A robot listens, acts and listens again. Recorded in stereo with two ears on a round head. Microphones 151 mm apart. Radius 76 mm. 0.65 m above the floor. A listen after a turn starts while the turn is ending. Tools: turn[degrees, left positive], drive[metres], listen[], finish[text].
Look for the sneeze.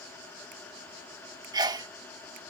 Thought: The sneeze: about 25° right or 155° right.
Action: turn[-25]
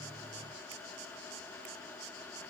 Action: listen[]
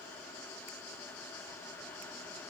Action: finish[I heard a sneeze, but can't make it out now. It was about straight ahead or 130° right.]